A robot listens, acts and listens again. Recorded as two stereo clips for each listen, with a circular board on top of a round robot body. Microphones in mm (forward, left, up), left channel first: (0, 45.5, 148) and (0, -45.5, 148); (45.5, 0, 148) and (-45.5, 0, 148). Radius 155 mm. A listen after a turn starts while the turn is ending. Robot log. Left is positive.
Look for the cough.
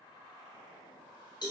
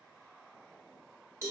cmd idle
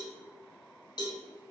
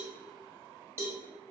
cmd idle
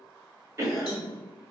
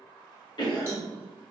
note: The cough: 35° right.
cmd yaw -35
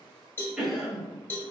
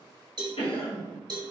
end: Found it: a cough, straight ahead.